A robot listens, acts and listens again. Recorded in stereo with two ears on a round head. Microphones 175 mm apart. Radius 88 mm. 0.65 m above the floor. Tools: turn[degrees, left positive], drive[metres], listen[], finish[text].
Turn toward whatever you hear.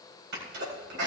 Thought: The sneeze: about 65° right or 115° right.
Action: turn[-65]
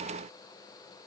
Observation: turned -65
Action: listen[]
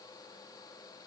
Action: finish[I heard a sneeze, but can't make it out now. It was about straight ahead or 50° right.]